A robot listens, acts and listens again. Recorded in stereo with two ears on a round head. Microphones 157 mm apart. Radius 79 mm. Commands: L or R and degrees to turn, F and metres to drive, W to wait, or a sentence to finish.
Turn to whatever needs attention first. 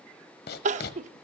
R40
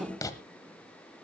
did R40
Found it: crying, straight ahead, under 1 m away.